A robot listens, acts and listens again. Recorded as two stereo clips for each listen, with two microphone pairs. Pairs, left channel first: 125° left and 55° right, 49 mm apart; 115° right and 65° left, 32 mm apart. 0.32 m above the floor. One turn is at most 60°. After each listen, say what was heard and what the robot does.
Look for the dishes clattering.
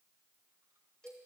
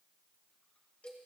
Keep listening.
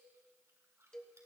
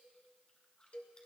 Keep listening.
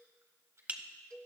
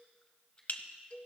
The dishes clattering: 105° right. Turn 60° right.
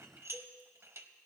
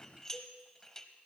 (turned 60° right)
The dishes clattering is now 45° right. Turn 45° right.
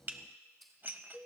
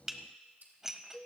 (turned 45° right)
The dishes clattering is now 10° right. Turn 10° right.
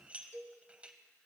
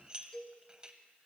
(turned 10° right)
Found it: dishes clattering, straight ahead, under 1 m away.